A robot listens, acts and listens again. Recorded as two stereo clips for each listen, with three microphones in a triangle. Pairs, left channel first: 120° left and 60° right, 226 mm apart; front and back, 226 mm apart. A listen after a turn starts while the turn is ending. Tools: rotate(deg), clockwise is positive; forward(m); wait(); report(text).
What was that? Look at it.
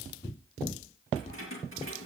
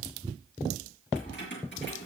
rotate(40)
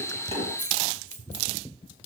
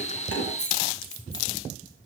rotate(-10)
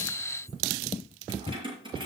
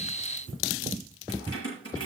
rotate(-10)
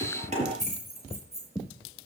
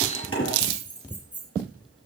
report("Facing the keys jangling.")